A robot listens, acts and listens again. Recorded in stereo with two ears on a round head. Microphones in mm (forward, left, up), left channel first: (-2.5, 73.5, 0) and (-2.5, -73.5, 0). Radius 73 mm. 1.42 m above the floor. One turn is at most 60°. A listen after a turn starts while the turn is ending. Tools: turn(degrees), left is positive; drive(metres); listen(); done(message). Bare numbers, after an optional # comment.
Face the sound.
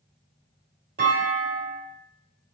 # The clunk: about 60° right or 120° right.
turn(-60)
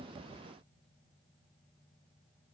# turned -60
listen()
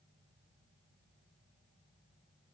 done("I heard a clunk, but can't make it out now. It was about straight ahead or 60° right.")